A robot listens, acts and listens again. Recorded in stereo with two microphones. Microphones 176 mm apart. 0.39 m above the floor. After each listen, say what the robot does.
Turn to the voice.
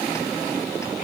Keep listening.
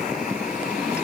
Keep listening.
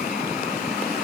I can't make out anyone speaking.